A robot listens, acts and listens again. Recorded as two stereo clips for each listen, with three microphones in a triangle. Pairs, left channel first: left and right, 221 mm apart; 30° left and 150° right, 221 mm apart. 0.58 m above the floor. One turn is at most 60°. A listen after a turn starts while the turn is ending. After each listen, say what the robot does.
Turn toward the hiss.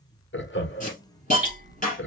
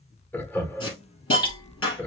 Turn 35° left.
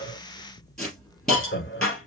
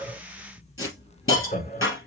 Found it: a hiss, straight ahead, 2 to 4 m away.